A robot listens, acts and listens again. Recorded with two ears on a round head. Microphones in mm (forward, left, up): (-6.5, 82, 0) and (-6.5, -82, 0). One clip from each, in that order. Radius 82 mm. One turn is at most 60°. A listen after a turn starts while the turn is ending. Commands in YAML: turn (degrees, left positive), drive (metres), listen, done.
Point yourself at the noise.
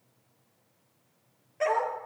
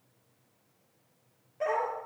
turn: 50
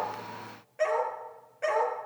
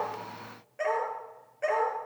done: "Facing the dog barking."